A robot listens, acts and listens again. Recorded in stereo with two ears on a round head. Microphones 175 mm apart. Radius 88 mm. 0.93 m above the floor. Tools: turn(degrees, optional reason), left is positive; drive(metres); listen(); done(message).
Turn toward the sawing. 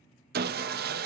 turn(degrees=-55, reason="The sawing: about 55° right or 125° right.")
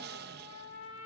turn(degrees=-65, reason="So it is at 65° right.")
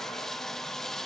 done("Found it: sawing, straight ahead, under 1 m away.")